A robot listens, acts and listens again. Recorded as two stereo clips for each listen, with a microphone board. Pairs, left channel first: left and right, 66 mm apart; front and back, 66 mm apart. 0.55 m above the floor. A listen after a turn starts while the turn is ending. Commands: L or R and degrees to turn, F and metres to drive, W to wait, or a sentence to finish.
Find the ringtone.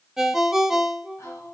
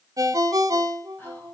R175
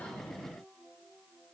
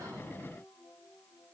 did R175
W
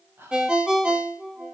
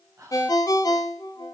R15
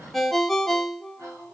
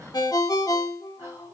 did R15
Facing the ringtone.